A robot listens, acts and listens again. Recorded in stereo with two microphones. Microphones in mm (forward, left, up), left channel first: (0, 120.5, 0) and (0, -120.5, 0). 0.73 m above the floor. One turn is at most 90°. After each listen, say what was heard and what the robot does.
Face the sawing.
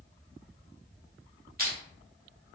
Keep listening.
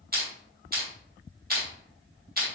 Keep listening.
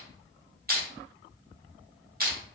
I can't make out sawing to turn to.